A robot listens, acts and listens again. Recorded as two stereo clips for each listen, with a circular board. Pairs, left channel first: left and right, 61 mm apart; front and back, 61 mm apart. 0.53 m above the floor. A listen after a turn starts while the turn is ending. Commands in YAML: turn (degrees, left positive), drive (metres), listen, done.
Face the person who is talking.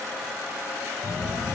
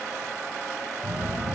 turn: 120
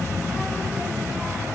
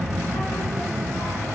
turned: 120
done: "Facing the child speaking."